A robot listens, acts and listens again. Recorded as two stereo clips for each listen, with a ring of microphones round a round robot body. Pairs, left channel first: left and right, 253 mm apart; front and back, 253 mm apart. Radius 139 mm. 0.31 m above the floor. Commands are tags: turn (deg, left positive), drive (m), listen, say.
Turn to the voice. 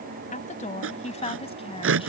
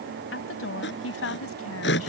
<turn deg="25"/>
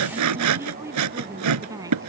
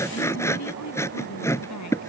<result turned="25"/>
<turn deg="-15"/>
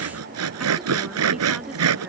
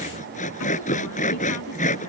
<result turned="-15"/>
<listen/>
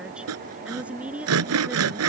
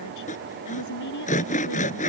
<say>Facing the woman speaking.</say>